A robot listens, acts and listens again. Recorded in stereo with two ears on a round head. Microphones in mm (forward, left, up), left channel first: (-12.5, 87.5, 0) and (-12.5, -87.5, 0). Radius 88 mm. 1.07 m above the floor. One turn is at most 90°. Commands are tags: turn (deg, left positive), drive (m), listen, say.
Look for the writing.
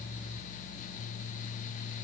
<listen/>
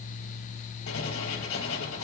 <turn deg="90"/>
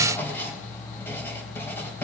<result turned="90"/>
<turn deg="10"/>
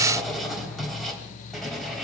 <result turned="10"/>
<say>Facing the writing, 2 to 4 m away.</say>